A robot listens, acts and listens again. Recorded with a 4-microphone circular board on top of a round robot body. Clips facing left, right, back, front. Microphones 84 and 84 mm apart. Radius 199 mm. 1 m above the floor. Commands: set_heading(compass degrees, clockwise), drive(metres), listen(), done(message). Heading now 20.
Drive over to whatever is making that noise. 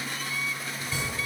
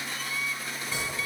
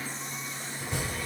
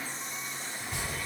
set_heading(175)
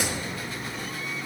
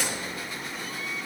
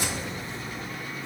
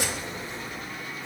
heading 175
set_heading(155)
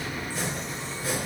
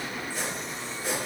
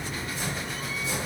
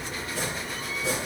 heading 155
drive(1.0)
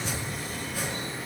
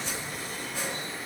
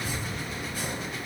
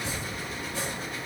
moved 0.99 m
set_heading(145)
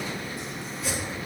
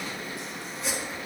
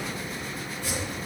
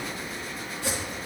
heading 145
drive(1.0)
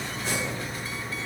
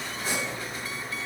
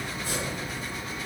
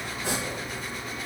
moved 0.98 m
drive(1.0)
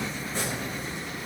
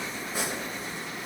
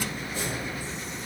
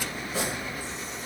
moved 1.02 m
set_heading(155)
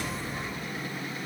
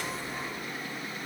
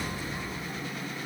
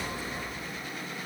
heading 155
listen()
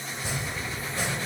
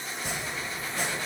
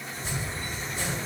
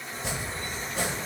drive(1.0)
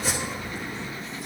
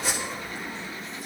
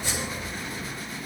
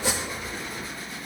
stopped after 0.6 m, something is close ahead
done("I am next to the chopping.")